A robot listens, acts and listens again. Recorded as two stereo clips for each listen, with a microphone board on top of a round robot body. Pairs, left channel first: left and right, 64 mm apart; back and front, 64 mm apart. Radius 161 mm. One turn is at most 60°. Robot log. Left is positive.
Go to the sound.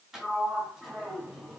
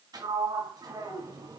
cmd fwd 1.0
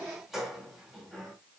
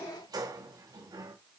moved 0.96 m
cmd fwd 1.0
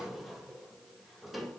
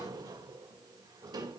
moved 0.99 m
cmd fwd 1.0
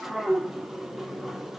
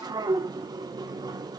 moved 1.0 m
cmd fwd 1.0
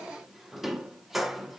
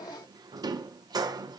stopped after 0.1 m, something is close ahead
end: Arrived at the sliding door, straight ahead.